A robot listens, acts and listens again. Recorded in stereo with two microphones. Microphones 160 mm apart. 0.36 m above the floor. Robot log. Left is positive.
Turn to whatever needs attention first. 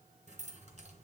cmd idle
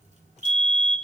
cmd yaw -30
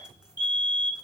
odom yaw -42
note: So it is at 30° left.
cmd yaw +30
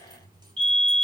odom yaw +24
end: Found it: a fire alarm, straight ahead, over 4 m away.